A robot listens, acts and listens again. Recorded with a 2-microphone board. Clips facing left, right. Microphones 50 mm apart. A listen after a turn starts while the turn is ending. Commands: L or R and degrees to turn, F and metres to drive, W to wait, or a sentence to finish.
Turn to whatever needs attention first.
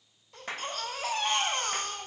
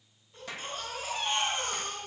L75
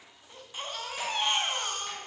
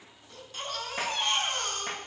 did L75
L15
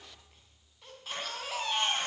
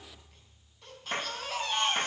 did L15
Facing the baby crying.